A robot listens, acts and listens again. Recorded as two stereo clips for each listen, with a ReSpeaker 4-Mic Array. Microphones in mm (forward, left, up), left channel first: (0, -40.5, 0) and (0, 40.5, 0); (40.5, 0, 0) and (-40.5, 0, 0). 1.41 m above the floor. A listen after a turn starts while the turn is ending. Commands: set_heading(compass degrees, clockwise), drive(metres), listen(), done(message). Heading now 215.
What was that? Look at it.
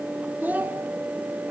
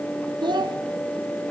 set_heading(55)
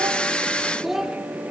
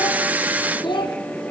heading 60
done("Facing the child speaking.")